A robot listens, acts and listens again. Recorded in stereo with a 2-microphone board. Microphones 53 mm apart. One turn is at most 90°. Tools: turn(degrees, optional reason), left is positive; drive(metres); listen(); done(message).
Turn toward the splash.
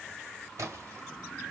turn(degrees=-90)
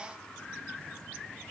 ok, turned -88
done("I heard a splash from this way, but can't make it out now.")